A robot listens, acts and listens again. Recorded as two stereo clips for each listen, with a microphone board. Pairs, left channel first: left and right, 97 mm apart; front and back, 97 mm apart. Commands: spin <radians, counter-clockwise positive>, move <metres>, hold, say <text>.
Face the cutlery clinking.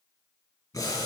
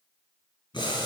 hold
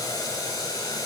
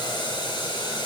hold
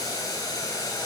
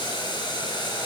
say I can't make out cutlery clinking to turn to.